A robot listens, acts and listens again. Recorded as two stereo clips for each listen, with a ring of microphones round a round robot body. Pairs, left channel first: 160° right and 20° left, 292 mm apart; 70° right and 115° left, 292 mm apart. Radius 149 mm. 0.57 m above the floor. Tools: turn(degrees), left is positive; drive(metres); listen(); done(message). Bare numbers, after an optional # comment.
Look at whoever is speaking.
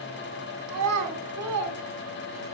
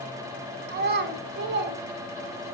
# The child speaking: 55° left.
turn(55)
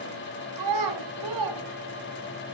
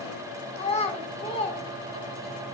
done("Found it: a child speaking, straight ahead.")